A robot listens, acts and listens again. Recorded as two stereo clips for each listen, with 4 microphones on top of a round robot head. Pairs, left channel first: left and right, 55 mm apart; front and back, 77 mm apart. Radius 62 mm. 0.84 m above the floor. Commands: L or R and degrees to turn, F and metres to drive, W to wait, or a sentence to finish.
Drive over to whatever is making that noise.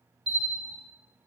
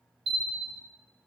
R175
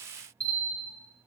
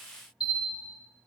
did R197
L20
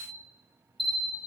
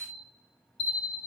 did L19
F1.0
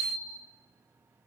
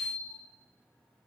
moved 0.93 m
L15
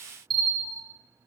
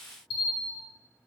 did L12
F1.0
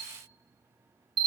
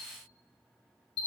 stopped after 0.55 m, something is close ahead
Arrived at the bell, straight ahead.